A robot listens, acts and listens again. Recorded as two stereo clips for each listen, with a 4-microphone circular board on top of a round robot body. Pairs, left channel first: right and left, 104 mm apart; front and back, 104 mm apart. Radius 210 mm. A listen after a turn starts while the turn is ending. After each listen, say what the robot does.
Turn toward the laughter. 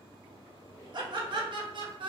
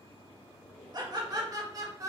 Turn 125° left.
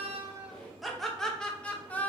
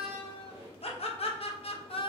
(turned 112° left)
Turn 20° right.
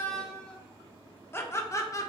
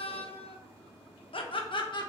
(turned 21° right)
Turn 35° right.
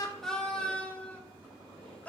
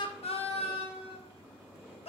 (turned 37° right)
Turn 15° right.
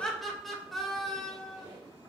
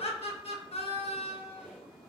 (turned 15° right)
Facing the laughter.